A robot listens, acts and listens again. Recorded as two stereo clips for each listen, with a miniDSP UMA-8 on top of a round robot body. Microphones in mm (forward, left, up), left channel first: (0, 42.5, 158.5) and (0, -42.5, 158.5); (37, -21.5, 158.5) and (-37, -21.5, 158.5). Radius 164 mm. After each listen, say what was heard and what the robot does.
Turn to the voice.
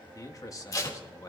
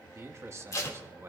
The man speaking: 135° left. Turn 135° left.
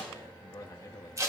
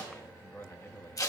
The man speaking is now 55° left. Turn 55° left.
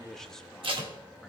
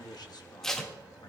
Facing the man speaking.